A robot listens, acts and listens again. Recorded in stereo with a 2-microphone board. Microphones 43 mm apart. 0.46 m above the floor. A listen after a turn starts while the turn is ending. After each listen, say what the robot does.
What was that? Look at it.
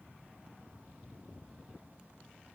Keep listening.
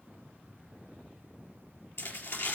Turn 90° left.
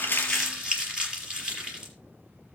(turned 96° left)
Turn 15° right.
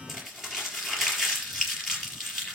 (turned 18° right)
Facing the crumpling.